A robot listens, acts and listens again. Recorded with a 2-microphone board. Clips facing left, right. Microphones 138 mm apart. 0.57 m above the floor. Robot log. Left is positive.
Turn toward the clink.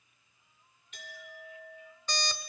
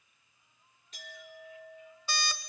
note: The clink: about 35° right or 145° right.
cmd yaw -35
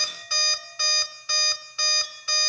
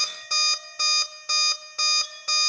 end: Facing the clink, over 4 m away.